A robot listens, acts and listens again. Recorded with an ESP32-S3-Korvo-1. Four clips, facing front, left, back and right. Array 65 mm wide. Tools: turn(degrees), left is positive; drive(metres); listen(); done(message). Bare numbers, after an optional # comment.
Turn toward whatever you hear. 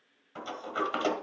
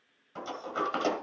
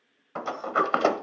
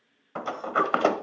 # The sliding door: 135° right.
turn(-135)
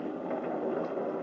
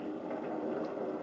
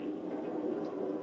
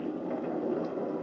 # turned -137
done("Found it: a sliding door, straight ahead.")